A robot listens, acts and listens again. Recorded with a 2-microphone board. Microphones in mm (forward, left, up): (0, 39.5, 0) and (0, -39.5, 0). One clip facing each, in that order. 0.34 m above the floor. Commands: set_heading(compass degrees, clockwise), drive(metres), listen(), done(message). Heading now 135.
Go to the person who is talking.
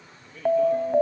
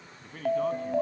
set_heading(195)
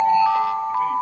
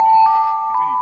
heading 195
listen()
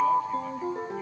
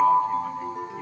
listen()
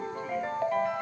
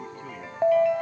done("I heard a man speaking, but can't make it out now. It was about straight ahead or 60° right. I did not reach it.")